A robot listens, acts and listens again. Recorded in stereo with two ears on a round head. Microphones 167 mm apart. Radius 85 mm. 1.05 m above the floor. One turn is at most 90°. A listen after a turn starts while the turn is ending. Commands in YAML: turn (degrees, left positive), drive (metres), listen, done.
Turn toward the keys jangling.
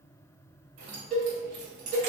turn: -65
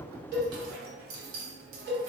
turn: -85
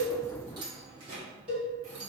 turn: -40
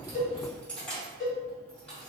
done: "Facing the keys jangling, 1 to 2 m away."